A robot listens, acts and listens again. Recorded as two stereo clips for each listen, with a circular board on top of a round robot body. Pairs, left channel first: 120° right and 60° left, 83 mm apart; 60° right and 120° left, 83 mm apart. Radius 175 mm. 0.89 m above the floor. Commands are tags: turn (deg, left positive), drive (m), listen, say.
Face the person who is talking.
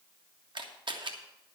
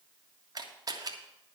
<listen/>
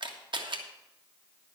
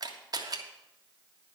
<listen/>
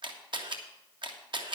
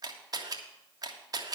<say>I can't make out anyone speaking to turn to.</say>